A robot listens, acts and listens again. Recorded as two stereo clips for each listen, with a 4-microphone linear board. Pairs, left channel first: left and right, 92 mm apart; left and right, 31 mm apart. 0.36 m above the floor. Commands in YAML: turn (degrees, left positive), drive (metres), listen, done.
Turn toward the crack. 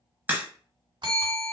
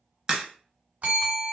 turn: -20
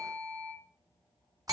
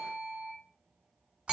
listen: true
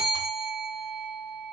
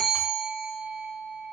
done: "I heard a crack, but can't make it out now. It was about straight ahead or 140° right."